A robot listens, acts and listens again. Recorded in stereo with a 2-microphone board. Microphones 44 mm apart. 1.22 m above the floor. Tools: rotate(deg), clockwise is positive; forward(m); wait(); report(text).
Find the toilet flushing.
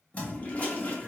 rotate(-35)
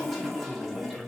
report("Facing the toilet flushing, under 1 m away.")